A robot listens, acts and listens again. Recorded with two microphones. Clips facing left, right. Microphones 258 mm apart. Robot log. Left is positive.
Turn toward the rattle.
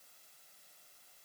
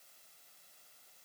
cmd idle
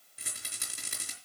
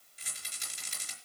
note: The rattle: about 60° left or 120° left.
cmd yaw +60
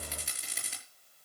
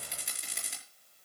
end: Facing the rattle, over 4 m away.